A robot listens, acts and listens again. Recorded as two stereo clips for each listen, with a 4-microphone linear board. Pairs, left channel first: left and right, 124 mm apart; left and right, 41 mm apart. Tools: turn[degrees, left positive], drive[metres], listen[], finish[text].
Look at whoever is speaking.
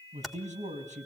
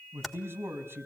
Thought: The man speaking: about 75° right or 105° right.
Action: turn[-75]
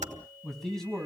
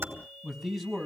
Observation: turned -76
Action: finish[Facing the man speaking.]